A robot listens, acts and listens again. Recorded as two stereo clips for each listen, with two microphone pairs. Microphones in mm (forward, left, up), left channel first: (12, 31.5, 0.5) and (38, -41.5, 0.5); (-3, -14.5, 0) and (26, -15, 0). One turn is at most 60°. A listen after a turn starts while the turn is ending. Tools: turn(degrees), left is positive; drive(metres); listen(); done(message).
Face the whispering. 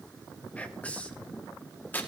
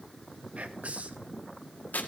turn(degrees=35)
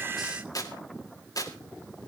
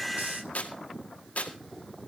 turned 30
listen()
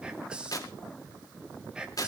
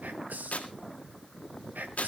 turn(degrees=10)
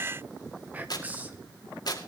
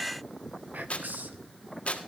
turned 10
done("Facing the whispering.")